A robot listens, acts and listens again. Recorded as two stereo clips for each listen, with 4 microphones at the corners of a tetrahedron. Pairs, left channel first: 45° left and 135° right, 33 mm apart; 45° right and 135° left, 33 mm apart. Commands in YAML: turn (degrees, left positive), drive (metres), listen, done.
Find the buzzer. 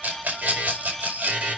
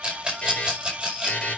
turn: -100
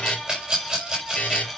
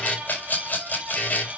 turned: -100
done: "Found it: a buzzer, straight ahead."